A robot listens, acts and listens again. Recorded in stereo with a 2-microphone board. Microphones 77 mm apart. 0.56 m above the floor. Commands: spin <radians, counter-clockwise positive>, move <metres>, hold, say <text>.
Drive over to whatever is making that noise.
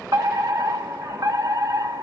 spin -0.96
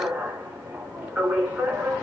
spin -0.35
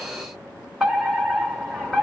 move 1.0
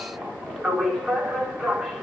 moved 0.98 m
move 1.0
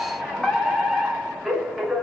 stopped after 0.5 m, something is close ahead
say I am next to the fire alarm.